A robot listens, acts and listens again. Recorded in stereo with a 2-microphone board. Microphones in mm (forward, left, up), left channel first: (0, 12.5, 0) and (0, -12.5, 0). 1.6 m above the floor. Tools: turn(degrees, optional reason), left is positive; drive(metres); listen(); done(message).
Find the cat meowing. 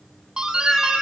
turn(degrees=-30)
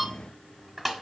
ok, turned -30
listen()
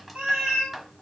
turn(degrees=-135, reason="So it is at 135° right.")
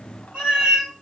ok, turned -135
turn(degrees=-50, reason="The cat meowing is now 50° right.")
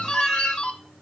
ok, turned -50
done("Facing the cat meowing, over 4 m away.")